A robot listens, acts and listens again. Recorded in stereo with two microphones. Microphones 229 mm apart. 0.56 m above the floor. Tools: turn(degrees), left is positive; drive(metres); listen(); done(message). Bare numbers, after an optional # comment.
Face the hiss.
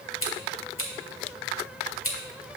listen()
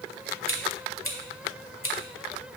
listen()
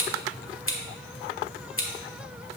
done("I can't make out a hiss, only scissors.")